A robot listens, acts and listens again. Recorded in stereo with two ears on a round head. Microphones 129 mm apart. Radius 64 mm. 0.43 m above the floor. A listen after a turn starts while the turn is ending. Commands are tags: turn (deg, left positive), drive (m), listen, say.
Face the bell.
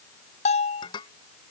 <turn deg="50"/>
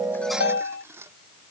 <turn deg="85"/>
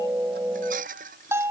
<turn deg="-15"/>
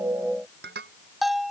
<say>Found it: a bell, straight ahead.</say>